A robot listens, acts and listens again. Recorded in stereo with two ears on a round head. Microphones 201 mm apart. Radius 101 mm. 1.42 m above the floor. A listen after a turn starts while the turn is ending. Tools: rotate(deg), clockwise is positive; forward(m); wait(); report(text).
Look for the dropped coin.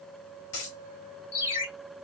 rotate(-60)
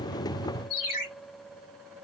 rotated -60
wait()
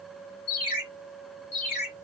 report("I heard a dropped coin, but can't make it out now. It was about straight ahead or 60° left.")